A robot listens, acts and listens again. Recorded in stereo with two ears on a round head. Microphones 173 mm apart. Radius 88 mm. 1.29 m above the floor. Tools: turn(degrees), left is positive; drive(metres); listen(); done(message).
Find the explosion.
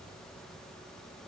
listen()
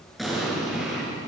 turn(degrees=30)
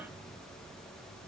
listen()
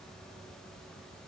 done("I heard an explosion, but can't make it out now. It was about 30° right or 150° left.")